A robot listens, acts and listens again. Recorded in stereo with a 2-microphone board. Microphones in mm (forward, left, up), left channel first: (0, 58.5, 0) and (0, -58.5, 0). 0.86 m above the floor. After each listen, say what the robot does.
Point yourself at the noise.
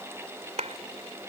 Turn 70° right.
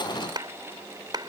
Turn 40° right.
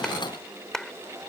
Facing the clap.